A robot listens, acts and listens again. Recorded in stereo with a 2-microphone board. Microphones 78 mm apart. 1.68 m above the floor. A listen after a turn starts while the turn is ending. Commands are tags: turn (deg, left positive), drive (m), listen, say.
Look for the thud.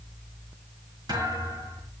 <turn deg="-65"/>
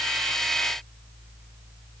<listen/>
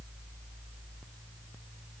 <say>I heard a thud, but can't make it out now. It was about straight ahead or 50° right.</say>